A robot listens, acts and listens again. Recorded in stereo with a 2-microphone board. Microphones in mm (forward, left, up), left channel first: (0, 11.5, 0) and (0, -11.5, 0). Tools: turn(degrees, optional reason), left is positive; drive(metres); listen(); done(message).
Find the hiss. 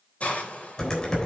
turn(degrees=70, reason="The hiss: about 70° left or 110° left.")
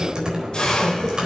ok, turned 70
turn(degrees=30, reason="So it is at 30° left.")
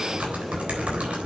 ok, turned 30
listen()
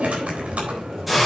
done("Facing the hiss.")